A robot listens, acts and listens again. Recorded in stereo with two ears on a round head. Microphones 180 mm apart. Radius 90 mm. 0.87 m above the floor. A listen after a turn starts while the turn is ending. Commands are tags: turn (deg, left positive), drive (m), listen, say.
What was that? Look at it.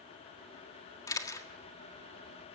<turn deg="20"/>
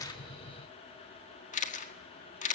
<turn deg="140"/>
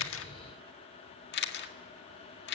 <turn deg="60"/>
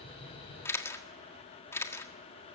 <turn deg="15"/>
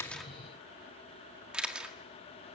<say>Facing the camera shutter, 1 to 2 m away.</say>